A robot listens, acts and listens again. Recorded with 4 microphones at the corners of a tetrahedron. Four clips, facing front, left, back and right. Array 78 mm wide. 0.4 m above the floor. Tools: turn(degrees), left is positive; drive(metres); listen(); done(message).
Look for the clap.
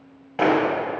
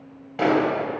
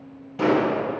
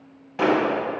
done("Facing the clap.")